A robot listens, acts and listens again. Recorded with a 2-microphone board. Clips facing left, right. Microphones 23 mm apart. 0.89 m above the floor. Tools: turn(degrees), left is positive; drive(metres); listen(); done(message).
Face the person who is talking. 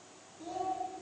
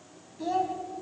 turn(degrees=-45)
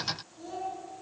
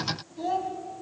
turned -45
turn(degrees=-90)
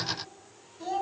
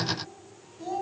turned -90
turn(degrees=20)
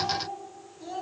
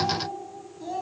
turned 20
done("Facing the child speaking, over 4 m away.")